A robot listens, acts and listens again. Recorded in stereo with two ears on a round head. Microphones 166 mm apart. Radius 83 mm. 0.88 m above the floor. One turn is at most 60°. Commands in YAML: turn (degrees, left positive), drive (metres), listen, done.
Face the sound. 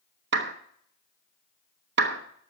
turn: -60
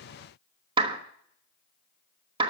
turn: -30
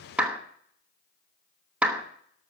turn: -10
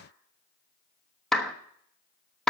done: "Found it: a clap, straight ahead."